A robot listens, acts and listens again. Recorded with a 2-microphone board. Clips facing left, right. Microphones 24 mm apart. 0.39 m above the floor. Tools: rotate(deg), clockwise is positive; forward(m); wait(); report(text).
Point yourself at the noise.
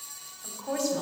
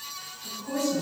rotate(-55)
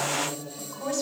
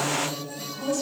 rotate(-15)
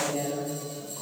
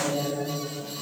rotate(-10)
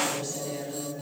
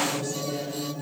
report("Found it: a woman speaking, straight ahead, 2 to 4 m away.")